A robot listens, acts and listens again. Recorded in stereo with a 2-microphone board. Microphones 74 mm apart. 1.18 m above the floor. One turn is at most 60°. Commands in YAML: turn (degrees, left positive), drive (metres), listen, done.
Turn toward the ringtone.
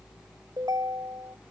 turn: -60
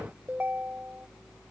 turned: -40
turn: -25
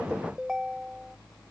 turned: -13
turn: -10
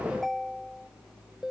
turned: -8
done: "Facing the ringtone."